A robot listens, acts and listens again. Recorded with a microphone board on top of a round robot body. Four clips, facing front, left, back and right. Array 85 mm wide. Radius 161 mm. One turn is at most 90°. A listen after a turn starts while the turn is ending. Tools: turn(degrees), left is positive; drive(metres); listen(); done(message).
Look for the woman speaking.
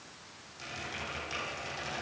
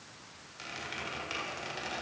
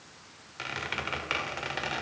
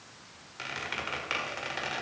listen()
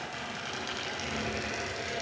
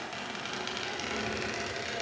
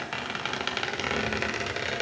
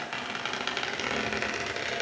listen()
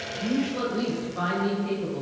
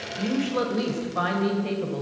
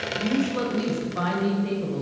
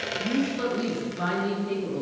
turn(degrees=90)
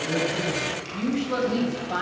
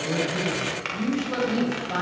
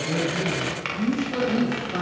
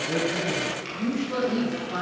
turn(degrees=30)
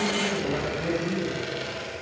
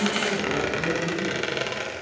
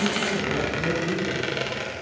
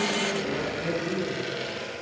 turn(degrees=10)
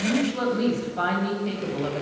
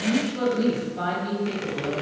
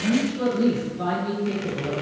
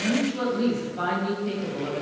done("Facing the woman speaking.")